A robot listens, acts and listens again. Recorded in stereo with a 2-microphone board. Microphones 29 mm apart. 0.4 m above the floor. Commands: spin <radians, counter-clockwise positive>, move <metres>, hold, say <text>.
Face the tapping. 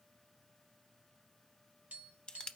spin -0.96
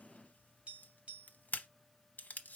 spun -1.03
spin -0.96
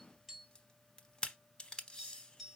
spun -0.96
say Found it: tapping, straight ahead, 1 to 2 m away.